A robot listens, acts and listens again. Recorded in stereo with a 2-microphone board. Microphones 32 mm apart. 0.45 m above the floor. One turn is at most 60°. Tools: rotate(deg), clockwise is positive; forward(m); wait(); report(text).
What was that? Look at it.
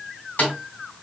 rotate(-60)
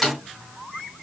rotate(-10)
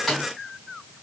report("Facing the snare drum.")